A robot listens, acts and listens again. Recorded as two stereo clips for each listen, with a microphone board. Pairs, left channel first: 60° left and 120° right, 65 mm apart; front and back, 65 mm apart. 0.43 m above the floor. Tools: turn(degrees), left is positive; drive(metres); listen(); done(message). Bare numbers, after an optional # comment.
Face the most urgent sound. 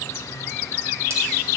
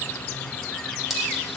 listen()
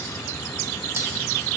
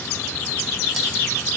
listen()
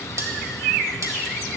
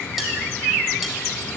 done("I can't make out anything urgent to turn to.")